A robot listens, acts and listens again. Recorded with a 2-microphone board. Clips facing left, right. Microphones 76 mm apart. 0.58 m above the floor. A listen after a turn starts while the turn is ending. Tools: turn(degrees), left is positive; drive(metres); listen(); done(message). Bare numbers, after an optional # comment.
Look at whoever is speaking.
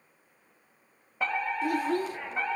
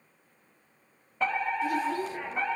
# The child speaking: about 50° left or 130° left.
turn(50)
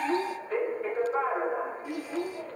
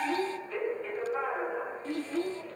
# So it is at 15° left.
turn(15)
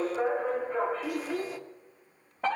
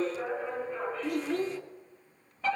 done("Found it: a child speaking, straight ahead, 1 to 2 m away.")